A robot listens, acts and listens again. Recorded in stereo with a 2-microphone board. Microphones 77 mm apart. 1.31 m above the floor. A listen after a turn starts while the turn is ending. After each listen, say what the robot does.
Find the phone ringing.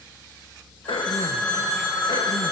Turn 15° left.
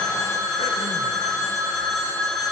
Facing the phone ringing, 2 to 4 m away.